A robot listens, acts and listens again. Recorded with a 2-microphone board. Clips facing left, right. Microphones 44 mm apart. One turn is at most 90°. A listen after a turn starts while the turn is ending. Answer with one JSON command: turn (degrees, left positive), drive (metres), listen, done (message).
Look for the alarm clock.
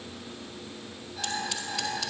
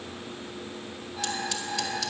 {"turn": -20}
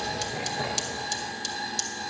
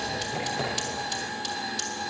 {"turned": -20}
{"done": "Found it: an alarm clock, straight ahead, over 4 m away."}